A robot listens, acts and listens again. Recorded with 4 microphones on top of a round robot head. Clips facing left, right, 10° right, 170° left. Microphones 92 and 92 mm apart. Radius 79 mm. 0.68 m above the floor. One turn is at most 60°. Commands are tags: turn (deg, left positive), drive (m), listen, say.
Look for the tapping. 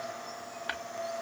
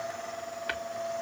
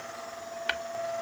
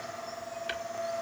<turn deg="20"/>
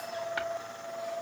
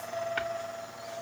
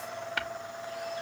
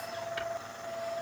<listen/>
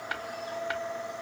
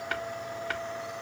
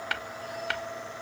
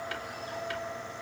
<turn deg="10"/>
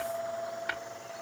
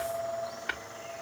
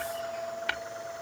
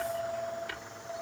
<say>Facing the tapping, 1 to 2 m away.</say>